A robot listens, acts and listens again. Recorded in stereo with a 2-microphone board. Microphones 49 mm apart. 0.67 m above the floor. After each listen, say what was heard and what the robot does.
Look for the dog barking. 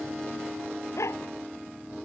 Turn 90° left.
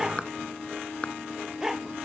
So it is at 10° right. Turn 10° right.
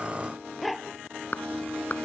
Found it: a dog barking, straight ahead.